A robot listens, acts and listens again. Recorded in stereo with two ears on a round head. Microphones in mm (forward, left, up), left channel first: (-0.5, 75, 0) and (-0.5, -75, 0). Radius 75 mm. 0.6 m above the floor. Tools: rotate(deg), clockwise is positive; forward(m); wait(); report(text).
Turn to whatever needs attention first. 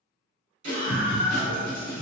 rotate(50)
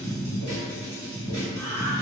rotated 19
rotate(120)
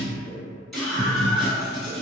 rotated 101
report("Found it: a scream, straight ahead.")